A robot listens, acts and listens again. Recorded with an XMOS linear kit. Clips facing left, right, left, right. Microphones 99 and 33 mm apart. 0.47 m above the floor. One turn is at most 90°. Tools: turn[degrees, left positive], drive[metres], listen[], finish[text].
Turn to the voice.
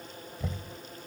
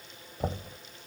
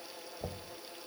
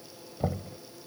Action: listen[]
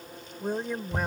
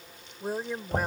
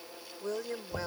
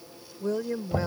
Action: turn[-30]
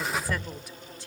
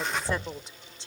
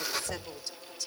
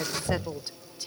Thought: So it is at 155° right.
Action: turn[-90]
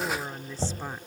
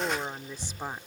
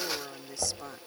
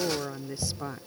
Thought: The woman speaking is now 15° right.
Action: turn[-15]
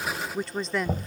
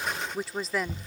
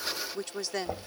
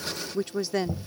Action: finish[Facing the woman speaking.]